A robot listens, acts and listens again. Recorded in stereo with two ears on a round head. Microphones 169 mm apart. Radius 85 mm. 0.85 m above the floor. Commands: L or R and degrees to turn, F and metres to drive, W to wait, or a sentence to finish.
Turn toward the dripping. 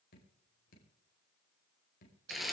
L55
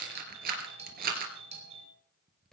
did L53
Facing the dripping.